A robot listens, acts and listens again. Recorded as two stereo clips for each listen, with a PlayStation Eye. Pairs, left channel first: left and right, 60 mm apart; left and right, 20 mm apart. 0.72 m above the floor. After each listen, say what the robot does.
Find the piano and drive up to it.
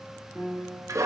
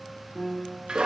Turn 20° right.
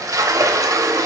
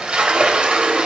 Keep listening.
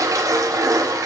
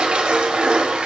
Keep listening.
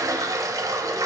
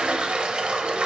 I heard a piano, but can't make it out now. It was about straight ahead or 140° right. I did not reach it.